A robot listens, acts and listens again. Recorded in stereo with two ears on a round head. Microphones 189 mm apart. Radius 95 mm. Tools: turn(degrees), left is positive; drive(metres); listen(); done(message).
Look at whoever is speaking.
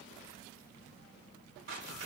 listen()
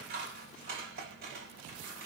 listen()
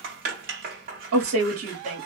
turn(degrees=-65)
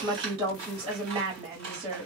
turn(degrees=-25)
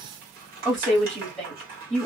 done("Facing the woman speaking, 1 to 2 m away.")